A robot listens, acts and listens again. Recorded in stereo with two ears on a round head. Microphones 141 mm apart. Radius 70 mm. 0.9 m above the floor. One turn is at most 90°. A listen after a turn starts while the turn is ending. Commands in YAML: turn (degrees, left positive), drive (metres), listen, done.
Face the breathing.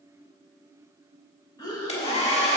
turn: 25
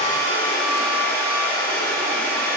listen: true
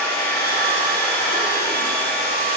listen: true
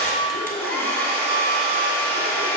done: "I heard breathing, but can't make it out now. It was about straight ahead or 130° left."